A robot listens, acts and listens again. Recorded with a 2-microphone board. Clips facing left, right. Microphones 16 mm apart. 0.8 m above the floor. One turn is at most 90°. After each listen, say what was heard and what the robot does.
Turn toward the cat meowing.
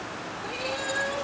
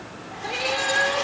The cat meowing: about 30° right or 150° right. Turn 30° right.
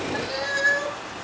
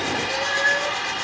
Facing the cat meowing.